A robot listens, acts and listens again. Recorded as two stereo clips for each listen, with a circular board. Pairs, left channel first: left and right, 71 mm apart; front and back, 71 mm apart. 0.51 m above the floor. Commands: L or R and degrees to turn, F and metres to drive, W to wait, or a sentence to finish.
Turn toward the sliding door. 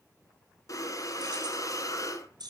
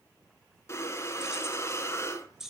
W
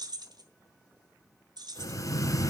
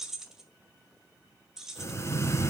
W
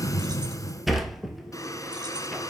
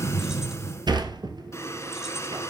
R175
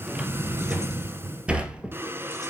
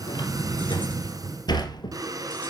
R15
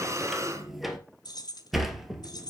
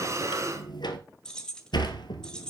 Facing the sliding door.